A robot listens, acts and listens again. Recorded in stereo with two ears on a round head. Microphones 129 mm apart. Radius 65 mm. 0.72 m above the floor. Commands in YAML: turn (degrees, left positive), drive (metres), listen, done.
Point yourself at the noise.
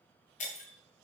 turn: 55
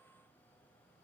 listen: true
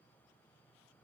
done: "I heard breaking glass, but can't make it out now. It was about straight ahead or 70° left."